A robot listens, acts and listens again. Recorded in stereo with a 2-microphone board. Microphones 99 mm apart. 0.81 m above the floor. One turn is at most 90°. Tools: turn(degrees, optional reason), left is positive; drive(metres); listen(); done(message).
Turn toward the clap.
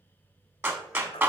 turn(degrees=-20, reason="The clap: about 20° right or 160° right.")
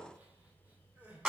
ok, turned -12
turn(degrees=-10, reason="So it is at 10° right.")
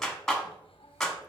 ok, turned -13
done("Found it: a clap, straight ahead, 1 to 2 m away.")